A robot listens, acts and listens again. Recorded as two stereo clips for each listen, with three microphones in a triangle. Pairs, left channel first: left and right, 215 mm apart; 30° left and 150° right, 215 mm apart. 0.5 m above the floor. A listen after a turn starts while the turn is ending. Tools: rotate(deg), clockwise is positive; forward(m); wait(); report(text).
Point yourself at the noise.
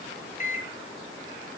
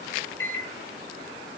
rotate(-40)
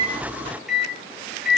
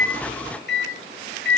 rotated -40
report("Facing the microwave.")